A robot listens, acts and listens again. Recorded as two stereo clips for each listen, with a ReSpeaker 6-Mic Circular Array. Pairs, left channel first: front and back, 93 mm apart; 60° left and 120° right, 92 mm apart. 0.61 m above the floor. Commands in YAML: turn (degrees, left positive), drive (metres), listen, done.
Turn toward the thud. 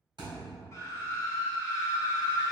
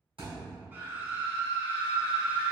turn: -140
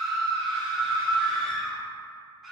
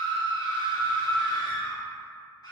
done: "I heard a thud from this way, but can't make it out now."